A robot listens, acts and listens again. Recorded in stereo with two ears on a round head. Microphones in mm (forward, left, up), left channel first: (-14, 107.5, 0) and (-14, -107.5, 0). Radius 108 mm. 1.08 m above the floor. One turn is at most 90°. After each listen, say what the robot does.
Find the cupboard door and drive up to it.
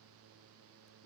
Keep listening.
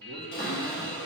Turn 40° left.
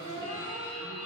Turn 90° left.
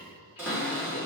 Turn 10° right.
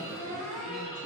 Drive 1.0 m forward.
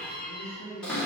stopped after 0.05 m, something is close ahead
Blocked. The cupboard door is further on, straight ahead.